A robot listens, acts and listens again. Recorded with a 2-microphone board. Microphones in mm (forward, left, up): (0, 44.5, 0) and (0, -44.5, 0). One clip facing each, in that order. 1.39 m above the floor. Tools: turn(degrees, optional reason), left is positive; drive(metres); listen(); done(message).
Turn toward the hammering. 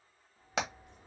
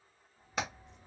turn(degrees=90)
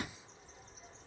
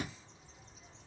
listen()
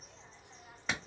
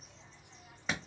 done("Found it: hammering, straight ahead, 1 to 2 m away.")